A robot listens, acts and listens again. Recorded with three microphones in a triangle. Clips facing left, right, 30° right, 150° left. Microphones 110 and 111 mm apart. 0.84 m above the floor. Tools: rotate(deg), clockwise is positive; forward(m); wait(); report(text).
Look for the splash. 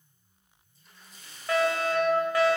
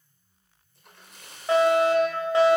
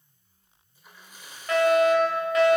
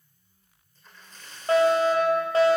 rotate(110)
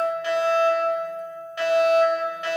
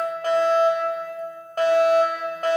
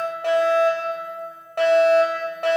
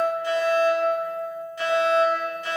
report("I heard a splash from this way, but can't make it out now.")